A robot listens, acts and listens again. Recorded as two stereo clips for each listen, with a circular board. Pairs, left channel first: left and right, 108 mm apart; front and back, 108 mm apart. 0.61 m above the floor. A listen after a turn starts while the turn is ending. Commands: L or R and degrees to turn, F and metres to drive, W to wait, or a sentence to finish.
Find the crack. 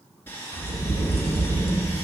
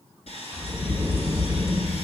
L60
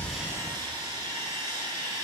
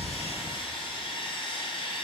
I heard a crack from this way, but can't make it out now.